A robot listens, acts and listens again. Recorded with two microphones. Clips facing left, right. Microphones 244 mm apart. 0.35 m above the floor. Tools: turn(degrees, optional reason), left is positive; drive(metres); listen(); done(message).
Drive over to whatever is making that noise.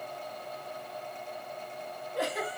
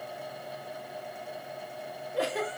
turn(degrees=-35, reason="The giggle: about 35° right or 145° right.")
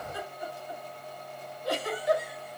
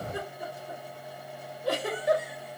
turn(degrees=-110, reason="So it is at 110° right.")
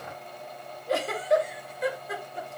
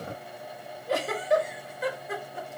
drive(metres=1.0)
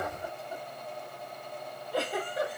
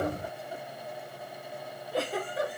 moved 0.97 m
drive(metres=1.0)
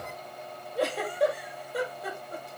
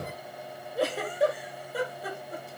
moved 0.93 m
drive(metres=1.0)
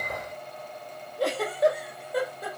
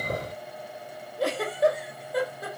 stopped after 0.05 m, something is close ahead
done("Arrived at the giggle, straight ahead.")